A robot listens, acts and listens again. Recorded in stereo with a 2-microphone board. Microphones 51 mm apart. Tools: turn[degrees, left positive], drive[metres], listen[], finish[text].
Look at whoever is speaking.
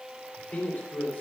Thought: The man speaking: about 30° left or 150° left.
Action: turn[30]
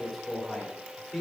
Action: finish[Facing the man speaking, 2 to 4 m away.]